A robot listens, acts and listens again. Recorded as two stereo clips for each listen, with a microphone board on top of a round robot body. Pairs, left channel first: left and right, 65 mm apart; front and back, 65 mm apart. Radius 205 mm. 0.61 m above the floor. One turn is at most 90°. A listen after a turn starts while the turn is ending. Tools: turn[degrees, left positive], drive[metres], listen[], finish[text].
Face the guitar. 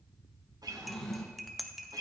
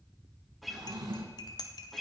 Thought: The guitar: 90° right.
Action: turn[-90]
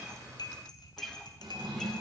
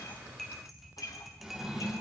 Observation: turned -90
Action: finish[Facing the guitar, 1 to 2 m away.]